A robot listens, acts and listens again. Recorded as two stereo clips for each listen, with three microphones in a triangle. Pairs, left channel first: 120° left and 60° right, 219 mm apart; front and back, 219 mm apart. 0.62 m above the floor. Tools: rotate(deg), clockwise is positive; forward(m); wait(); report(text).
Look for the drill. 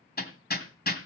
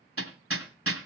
wait()
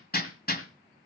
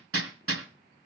wait()
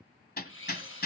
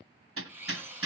rotate(-100)
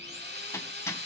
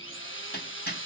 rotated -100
rotate(25)
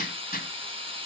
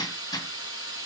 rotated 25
report("Facing the drill, 2 to 4 m away.")